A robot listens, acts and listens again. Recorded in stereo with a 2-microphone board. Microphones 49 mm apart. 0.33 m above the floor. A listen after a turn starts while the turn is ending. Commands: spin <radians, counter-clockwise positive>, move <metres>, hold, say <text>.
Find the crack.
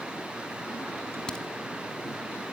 spin 0.35
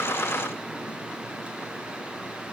hold
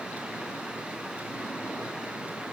say I heard a crack, but can't make it out now. It was about straight ahead or 140° left.